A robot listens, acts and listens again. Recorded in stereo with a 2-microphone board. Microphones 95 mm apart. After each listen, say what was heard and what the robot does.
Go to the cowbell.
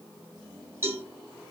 The cowbell: about 25° right or 155° right. Turn 25° right.
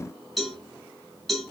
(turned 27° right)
Drive 1.0 m forward.
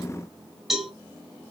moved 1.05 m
Drive 1.0 m forward.
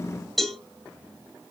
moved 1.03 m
Drive 1.0 m forward.
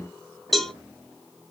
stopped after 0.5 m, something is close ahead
Arrived at the cowbell, straight ahead.